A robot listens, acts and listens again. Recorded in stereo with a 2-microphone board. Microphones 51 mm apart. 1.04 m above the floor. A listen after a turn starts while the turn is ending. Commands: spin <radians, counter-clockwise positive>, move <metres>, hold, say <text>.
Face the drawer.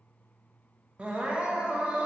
hold
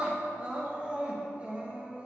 hold
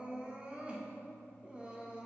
say I can't make out a drawer, only crying.